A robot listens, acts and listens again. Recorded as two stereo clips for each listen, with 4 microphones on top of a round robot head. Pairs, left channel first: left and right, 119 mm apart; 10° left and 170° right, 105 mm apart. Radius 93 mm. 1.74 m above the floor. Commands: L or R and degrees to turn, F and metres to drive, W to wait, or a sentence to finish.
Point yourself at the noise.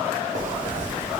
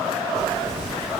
R85
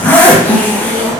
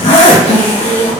L15
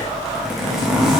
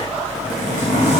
Facing the zipper.